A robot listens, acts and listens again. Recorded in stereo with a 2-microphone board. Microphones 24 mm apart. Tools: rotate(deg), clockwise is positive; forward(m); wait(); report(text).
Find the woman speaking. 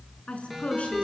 rotate(-55)
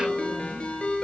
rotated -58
wait()
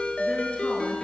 wait()
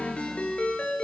report("I heard a woman speaking, but can't make it out now. It was about 5° right or 65° left.")